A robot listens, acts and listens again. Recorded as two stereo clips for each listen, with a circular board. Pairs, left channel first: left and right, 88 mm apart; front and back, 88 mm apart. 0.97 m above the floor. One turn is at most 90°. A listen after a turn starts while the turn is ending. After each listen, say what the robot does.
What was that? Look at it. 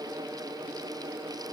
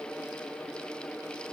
Keep listening.
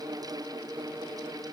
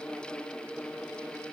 Keep listening.
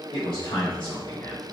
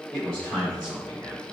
Turn 90° left.
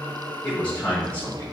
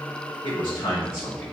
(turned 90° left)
Turn 20° left.
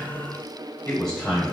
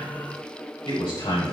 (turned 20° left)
Turn 10° left.
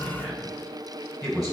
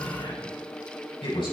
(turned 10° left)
Found it: a man speaking, straight ahead, 2 to 4 m away.